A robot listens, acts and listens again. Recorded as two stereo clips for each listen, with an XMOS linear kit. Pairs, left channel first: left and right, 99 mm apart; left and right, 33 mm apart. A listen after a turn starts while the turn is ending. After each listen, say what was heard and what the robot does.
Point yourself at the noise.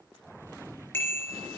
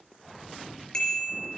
The bicycle bell: about 20° left or 160° left. Turn 20° left.
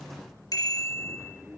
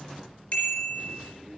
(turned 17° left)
So it is at 145° left. Turn 145° left.
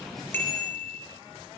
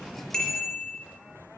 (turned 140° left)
Found it: a bicycle bell, straight ahead, over 4 m away.